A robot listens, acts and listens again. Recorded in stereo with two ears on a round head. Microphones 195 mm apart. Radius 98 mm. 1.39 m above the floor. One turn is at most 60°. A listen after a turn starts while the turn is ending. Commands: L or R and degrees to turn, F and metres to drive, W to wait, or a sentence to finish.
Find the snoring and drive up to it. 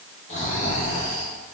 L35
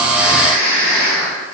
L60
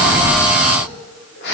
L55
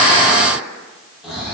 F1.0
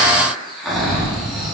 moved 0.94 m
F1.0
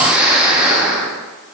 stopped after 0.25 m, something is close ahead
Arrived at the snoring, straight ahead.